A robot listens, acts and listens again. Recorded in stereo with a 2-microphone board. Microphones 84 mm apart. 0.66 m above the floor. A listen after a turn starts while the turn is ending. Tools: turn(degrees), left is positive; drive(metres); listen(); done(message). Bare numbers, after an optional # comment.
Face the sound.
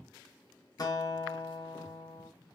# The guitar: about 45° left or 135° left.
turn(45)
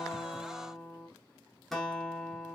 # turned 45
done("Found it: a guitar, straight ahead, under 1 m away.")